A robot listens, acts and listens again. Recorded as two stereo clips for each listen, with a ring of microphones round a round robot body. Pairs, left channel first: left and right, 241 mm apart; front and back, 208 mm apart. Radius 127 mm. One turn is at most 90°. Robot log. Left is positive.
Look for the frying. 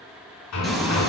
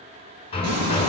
note: The frying: straight behind.
cmd yaw +90
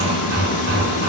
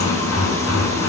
note: The frying is now 75° left.
cmd yaw +75
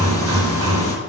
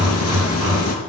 cmd idle
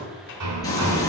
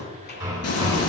note: The frying is now 15° left.
cmd yaw +15
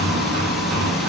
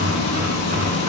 end: Facing the frying.